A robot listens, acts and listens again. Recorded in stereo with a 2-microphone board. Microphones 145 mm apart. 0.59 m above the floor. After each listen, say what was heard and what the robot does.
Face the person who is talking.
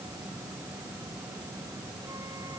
Keep listening.
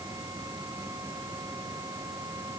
Keep listening.
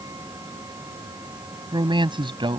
The man speaking: about 35° right or 145° right. Turn 35° right.
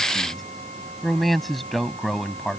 Facing the man speaking.